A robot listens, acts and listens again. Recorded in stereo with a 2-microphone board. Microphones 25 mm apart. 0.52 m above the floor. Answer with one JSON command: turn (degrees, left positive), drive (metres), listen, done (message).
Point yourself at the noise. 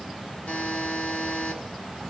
{"turn": 50}
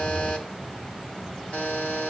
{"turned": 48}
{"turn": 80}
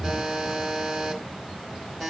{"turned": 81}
{"done": "Facing the buzzer, 1 to 2 m away."}